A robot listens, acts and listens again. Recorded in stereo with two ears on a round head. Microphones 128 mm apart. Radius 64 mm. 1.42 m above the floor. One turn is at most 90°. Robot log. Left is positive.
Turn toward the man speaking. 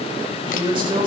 note: The man speaking: about 35° right or 145° right.
cmd yaw -35
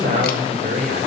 note: So it is at 120° right.
cmd yaw -90
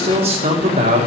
note: The man speaking is now 50° right.
cmd yaw -50
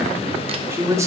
note: The man speaking is now 20° right.
cmd yaw -20
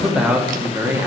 note: The man speaking is now 15° right.
cmd yaw -15
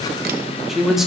end: Facing the man speaking.